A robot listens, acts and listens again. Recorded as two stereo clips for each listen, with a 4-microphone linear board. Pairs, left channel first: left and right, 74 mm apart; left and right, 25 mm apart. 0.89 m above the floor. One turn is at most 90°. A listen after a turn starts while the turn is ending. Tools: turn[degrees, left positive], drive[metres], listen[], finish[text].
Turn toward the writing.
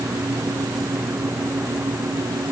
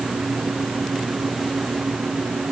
Action: listen[]
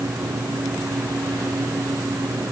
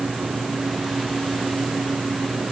Action: listen[]
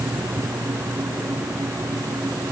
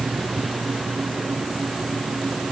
Action: finish[I can't make out writing to turn to.]